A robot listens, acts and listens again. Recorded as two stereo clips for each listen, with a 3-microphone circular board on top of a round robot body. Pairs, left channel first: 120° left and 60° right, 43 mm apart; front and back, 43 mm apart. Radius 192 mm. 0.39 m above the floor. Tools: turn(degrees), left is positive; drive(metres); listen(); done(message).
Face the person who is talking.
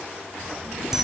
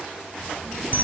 turn(degrees=-80)
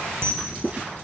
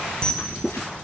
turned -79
done("Facing the child speaking, 2 to 4 m away.")